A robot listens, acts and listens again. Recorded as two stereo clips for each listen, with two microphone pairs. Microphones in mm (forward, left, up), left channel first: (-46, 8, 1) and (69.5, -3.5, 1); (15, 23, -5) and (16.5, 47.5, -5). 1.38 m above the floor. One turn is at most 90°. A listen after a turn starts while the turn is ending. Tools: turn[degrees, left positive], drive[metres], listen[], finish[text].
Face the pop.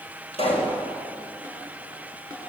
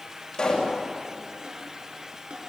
Thought: The pop: 155° right.
Action: turn[-90]
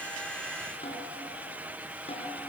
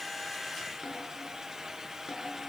Thought: Nothing new. It was at 65° right.
Action: turn[-65]
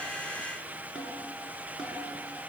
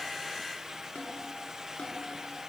Action: finish[I heard a pop from this way, but can't make it out now.]